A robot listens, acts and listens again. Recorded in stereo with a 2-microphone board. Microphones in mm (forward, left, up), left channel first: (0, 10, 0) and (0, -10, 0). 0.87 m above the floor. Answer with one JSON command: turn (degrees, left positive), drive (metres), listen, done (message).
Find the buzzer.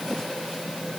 {"listen": true}
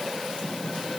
{"listen": true}
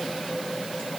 {"done": "I can't make out a buzzer to turn to."}